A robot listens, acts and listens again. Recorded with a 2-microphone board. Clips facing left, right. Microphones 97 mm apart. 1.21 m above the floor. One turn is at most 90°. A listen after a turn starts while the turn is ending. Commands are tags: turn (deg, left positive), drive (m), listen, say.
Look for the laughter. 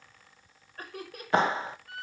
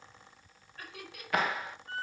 <turn deg="45"/>
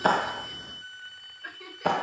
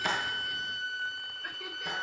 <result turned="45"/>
<listen/>
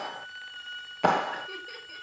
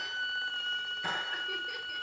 <listen/>
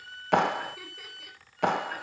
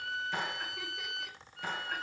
<say>I heard laughter, but can't make it out now. It was about straight ahead or 90° left.</say>